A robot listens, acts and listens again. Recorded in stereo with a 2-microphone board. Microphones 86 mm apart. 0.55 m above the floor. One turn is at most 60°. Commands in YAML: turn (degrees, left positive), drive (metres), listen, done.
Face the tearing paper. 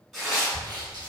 turn: 30
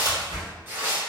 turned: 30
turn: -30
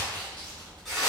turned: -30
done: "Facing the tearing paper."